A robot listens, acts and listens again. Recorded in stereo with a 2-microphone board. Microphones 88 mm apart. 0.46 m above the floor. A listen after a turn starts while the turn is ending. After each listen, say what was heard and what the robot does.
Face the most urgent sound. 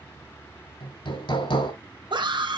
The scream: about 60° right or 120° right. Turn 60° right.
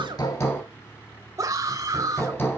So it is at 45° right. Turn 45° right.
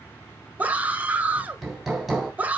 The scream is now 20° right. Turn 20° right.
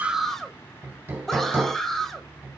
Facing the scream.